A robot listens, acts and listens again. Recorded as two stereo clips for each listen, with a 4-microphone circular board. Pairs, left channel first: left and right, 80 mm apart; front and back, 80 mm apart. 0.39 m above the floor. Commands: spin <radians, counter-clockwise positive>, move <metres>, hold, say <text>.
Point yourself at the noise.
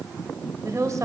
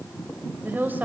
spin -2.09
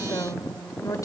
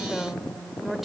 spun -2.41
spin 1.66
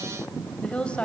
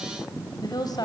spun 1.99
spin 0.26
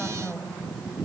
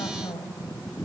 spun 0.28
say Found it: a woman speaking, straight ahead.